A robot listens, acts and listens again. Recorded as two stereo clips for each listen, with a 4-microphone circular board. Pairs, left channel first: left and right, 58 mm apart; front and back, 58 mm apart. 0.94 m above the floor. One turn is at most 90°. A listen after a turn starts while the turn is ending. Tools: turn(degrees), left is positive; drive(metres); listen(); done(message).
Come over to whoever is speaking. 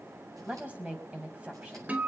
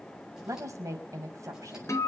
turn(degrees=-90)
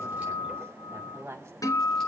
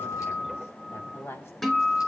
turn(degrees=-45)
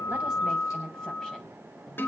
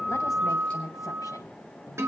turn(degrees=10)
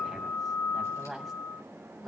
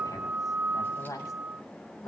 drive(metres=1.0)
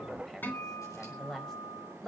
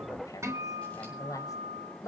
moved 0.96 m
drive(metres=1.0)
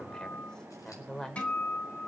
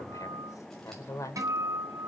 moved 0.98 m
turn(degrees=10)
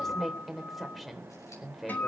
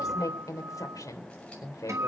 drive(metres=1.0)
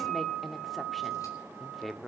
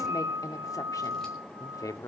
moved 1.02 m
drive(metres=1.0)
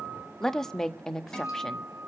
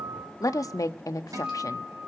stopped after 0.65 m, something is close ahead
turn(degrees=10)
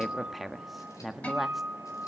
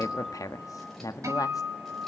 done("I am next to the woman speaking.")